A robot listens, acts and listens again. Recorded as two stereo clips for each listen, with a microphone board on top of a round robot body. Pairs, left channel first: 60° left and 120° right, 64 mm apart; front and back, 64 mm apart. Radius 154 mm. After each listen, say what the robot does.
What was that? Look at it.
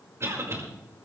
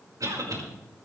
Turn 160° right.
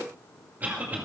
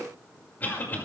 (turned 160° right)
Turn 60° right.
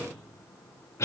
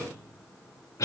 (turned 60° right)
Turn 25° left.
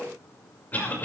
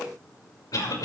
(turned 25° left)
Found it: a cough, straight ahead.